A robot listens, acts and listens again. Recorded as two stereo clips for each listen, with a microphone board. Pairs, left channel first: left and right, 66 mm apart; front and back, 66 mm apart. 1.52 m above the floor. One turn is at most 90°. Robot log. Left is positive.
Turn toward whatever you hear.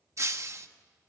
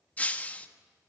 note: The breaking glass: 60° right.
cmd yaw -60
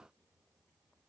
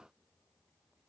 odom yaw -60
end: Facing where the breaking glass came from. I can't hear it now.